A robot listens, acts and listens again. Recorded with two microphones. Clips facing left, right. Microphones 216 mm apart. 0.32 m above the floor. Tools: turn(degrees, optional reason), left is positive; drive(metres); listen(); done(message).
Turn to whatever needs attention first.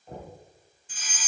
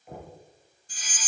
turn(degrees=-40, reason="The fire alarm: about 40° right or 140° right.")
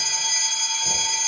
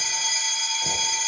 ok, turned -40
turn(degrees=-10, reason="So it is at 10° right.")
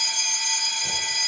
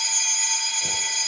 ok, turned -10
done("Facing the fire alarm.")